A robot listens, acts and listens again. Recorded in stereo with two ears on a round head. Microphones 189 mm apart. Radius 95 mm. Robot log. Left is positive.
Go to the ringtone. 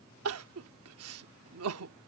cmd idle
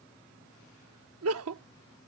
cmd idle
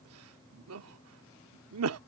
end: I can't make out a ringtone to turn to.